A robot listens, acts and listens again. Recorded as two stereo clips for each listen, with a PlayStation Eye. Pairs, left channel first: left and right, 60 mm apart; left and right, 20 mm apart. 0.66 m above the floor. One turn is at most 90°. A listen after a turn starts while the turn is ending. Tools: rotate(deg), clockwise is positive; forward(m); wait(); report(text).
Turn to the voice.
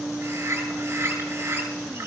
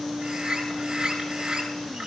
wait()
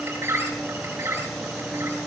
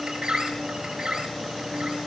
wait()
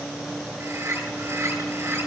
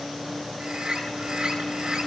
report("I can't make out anyone speaking to turn to.")